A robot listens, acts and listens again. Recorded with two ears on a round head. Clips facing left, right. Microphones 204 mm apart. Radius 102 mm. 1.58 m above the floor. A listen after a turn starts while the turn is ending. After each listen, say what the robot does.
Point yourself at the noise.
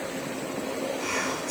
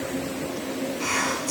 Turn 70° right.
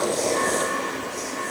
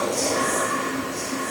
Facing the whispering, under 1 m away.